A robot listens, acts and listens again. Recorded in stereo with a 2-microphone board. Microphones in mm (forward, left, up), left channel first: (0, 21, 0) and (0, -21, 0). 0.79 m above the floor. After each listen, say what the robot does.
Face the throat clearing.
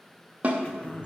Turn 30° left.
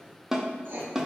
Keep listening.
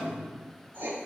Turn 120° left.
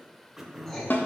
Turn 10° right.
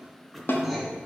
Facing the throat clearing, under 1 m away.